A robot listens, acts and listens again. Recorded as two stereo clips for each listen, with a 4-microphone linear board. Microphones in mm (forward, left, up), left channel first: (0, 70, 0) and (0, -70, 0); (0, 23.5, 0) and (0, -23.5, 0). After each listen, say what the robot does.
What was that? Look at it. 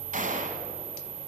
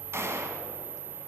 Turn 60° right.
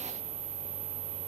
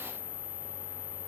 Keep listening.
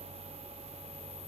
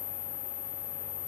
I heard a gunshot, but can't make it out now. It was about straight ahead or 60° right.